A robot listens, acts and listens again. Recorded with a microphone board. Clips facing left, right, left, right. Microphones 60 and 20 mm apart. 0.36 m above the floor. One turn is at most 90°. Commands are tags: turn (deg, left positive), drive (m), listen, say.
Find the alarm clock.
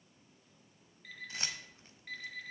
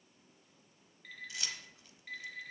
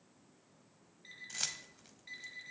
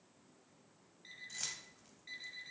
<turn deg="30"/>
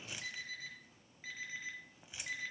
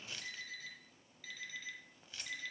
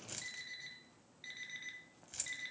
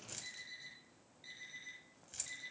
<turn deg="90"/>
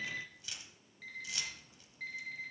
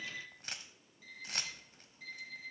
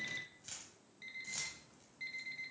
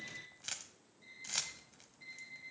<turn deg="70"/>
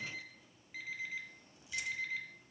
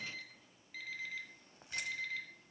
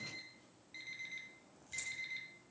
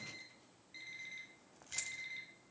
<turn deg="15"/>
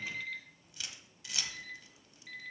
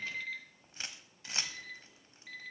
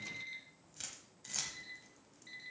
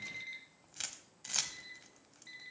<say>Facing the alarm clock.</say>